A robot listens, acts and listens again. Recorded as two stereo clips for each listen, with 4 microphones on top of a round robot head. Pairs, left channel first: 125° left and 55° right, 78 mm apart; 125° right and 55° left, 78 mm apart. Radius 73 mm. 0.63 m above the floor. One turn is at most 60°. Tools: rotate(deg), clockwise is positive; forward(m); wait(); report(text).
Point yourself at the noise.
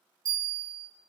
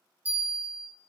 rotate(15)
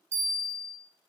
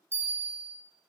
report("Facing the bell.")